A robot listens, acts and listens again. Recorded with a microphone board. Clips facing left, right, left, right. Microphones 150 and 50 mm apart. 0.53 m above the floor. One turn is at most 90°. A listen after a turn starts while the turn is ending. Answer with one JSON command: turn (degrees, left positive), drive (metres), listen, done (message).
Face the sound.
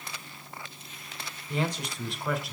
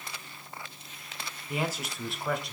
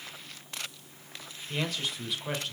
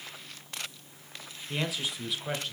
{"turn": 30}
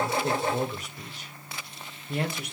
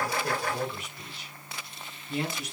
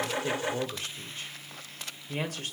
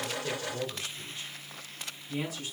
{"turn": 90}
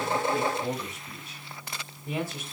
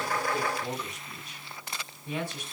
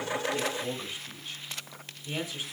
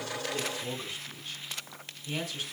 {"turn": 20}
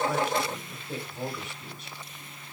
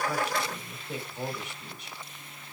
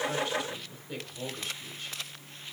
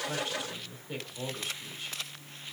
{"done": "Found it: a man speaking, straight ahead, 2 to 4 m away."}